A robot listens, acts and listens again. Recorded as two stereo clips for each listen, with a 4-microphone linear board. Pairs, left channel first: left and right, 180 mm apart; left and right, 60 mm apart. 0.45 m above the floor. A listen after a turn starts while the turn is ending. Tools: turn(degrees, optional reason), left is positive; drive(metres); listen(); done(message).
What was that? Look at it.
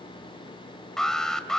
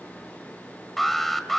turn(degrees=30)
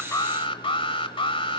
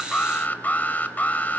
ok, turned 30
turn(degrees=145, reason="So it is at 145° left.")
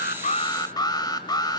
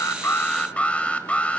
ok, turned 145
turn(degrees=25, reason="The alarm is now 25° left.")
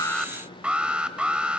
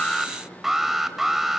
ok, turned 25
done("Facing the alarm.")